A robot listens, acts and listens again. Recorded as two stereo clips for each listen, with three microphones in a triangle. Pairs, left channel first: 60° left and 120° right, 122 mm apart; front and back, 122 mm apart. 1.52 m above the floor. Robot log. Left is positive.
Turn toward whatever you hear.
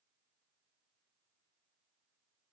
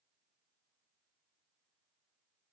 cmd idle
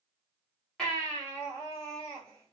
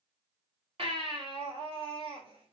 note: The baby crying: 145° left.
cmd yaw +145
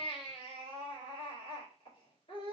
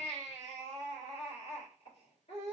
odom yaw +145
note: The baby crying is now 25° left.
cmd yaw +25
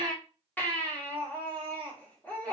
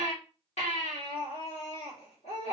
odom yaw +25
note: The baby crying is now 15° right.
cmd yaw -15
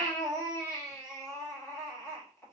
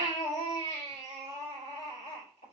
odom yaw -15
end: Found it: a baby crying, straight ahead.